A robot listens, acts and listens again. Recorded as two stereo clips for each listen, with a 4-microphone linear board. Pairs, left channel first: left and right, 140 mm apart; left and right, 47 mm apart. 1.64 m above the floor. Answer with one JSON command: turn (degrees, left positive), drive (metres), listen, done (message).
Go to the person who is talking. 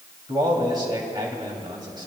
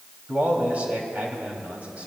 {"turn": -35}
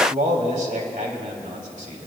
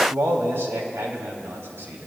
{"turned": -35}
{"turn": -110}
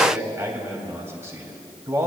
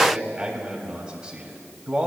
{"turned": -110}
{"turn": -20}
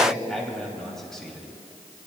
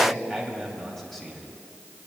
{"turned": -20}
{"drive": 1.0}
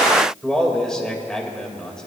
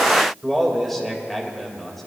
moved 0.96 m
{"drive": 1.0}
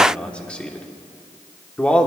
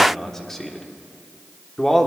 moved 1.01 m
{"turn": 10}
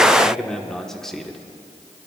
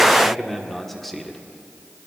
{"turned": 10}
{"drive": 1.0}
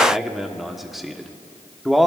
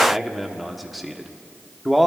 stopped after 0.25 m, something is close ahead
{"done": "I am next to the man speaking."}